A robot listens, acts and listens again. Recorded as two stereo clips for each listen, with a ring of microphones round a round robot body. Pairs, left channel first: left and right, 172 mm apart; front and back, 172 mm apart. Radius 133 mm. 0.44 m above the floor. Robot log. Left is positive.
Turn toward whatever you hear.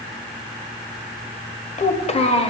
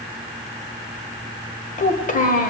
note: The child speaking: 35° left.
cmd yaw +35
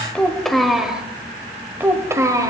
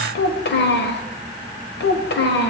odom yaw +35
note: The child speaking is now 20° right.
cmd yaw -20
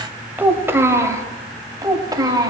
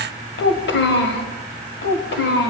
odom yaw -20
note: The child speaking is now 20° right.
cmd yaw -20
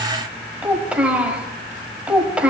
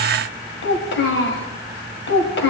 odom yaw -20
end: Facing the child speaking.